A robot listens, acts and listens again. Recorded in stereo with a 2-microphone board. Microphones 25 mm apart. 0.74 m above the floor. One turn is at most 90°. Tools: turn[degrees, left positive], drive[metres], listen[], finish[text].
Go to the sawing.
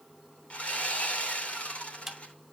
Thought: The sawing: about 60° left or 120° left.
Action: turn[60]
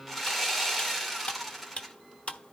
Action: drive[1.0]
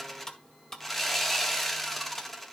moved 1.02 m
Thought: The sawing is now 10° left.
Action: turn[10]
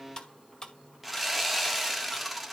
Action: drive[1.0]
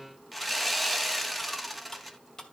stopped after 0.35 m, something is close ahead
Action: finish[Arrived at the sawing, straight ahead.]